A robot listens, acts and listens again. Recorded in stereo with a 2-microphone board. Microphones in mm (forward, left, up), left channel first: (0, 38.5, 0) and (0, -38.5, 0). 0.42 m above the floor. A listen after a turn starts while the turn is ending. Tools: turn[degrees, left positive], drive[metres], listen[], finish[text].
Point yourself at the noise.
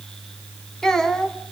Action: turn[30]
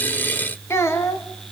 Thought: So it is at 140° left.
Action: turn[140]
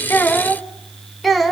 Action: finish[Facing the child speaking.]